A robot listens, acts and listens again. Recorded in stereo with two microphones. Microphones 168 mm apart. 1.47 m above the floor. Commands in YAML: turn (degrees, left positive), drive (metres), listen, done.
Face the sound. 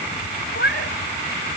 turn: 90
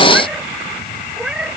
done: "Found it: a cat meowing, straight ahead."